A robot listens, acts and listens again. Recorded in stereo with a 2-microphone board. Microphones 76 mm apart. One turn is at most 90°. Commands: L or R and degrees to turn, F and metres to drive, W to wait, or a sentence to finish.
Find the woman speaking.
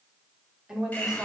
R30
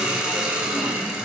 W
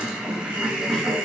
W
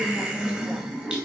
L30
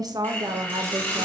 R60
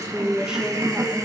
Facing the woman speaking, 1 to 2 m away.